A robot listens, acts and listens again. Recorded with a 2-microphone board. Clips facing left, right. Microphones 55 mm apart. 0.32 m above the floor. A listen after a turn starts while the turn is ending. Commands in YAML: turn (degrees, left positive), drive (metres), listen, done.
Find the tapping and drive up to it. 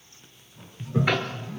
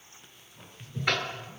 turn: 30
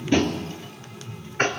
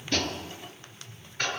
turn: 140
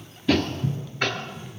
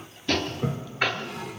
turn: -10
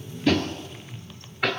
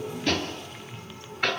drive: 1.0
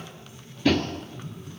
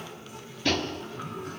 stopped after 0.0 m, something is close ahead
done: "Something is in my way. I am facing the tapping but have not reached it."